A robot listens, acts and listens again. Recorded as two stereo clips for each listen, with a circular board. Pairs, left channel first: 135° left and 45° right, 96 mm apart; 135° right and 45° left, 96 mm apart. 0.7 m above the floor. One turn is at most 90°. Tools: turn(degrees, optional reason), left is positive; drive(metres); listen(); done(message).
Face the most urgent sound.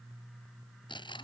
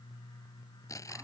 listen()
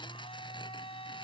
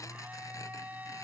listen()
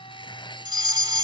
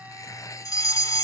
turn(degrees=-85, reason="The fire alarm: 85° right.")
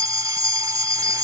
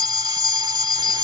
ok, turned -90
done("Facing the fire alarm.")